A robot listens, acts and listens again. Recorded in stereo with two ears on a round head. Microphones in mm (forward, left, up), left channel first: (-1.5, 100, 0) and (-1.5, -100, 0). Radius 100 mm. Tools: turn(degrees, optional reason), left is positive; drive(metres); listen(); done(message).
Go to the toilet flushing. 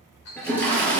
turn(degrees=30)
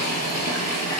turn(degrees=140, reason="So it is at 140° left.")
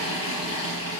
turn(degrees=75, reason="The toilet flushing is now 75° left.")
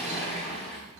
turn(degrees=10, reason="The toilet flushing is now 10° left.")
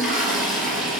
drive(metres=1.0)
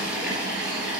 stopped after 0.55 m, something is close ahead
done("Something is in my way. I am facing the toilet flushing but have not reached it.")